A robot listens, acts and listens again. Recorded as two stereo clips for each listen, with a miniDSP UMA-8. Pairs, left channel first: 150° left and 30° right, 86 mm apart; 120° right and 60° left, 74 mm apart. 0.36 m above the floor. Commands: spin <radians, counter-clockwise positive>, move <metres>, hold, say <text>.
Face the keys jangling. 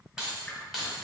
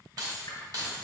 spin 1.05
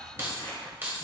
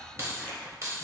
spin 0.61
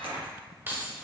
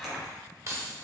spin 0.61
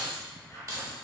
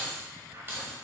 spin 0.26
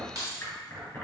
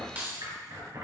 spin 0.17
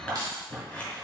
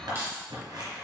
spin 0.26
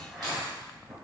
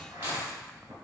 hold
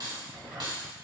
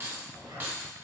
say Facing the keys jangling, 1 to 2 m away.